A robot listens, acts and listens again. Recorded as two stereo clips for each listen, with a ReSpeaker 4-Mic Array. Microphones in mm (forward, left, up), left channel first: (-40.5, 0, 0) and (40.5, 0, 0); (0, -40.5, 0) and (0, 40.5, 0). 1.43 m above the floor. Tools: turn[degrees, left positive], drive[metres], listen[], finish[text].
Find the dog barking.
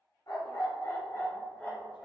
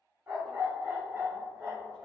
Thought: The dog barking: 120° left.
Action: turn[120]
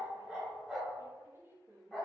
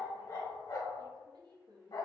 Thought: The dog barking is now 95° right.
Action: turn[-95]
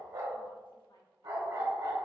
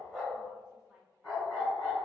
Action: finish[Found it: a dog barking, straight ahead, 2 to 4 m away.]